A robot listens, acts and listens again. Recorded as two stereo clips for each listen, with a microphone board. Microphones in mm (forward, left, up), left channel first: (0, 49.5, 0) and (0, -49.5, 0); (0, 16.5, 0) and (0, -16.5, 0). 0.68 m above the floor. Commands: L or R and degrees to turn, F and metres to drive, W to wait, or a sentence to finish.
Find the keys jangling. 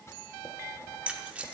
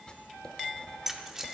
R30
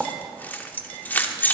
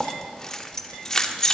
L20
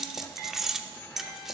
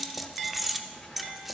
Found it: keys jangling, straight ahead, under 1 m away.